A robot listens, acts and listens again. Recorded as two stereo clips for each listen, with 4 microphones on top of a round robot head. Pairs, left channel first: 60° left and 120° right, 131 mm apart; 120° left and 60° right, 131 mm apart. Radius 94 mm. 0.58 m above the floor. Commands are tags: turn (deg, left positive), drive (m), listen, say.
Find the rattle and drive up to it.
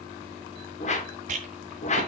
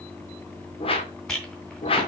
<turn deg="-150"/>
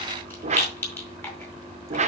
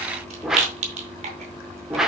<turn deg="-15"/>
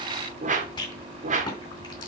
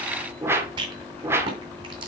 <drive m="1.0"/>
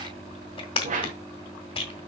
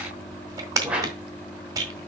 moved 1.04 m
<drive m="1.0"/>
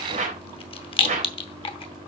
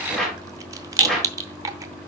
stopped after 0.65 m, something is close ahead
<turn deg="10"/>
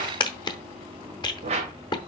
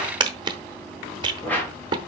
<say>Arrived at the rattle, straight ahead.</say>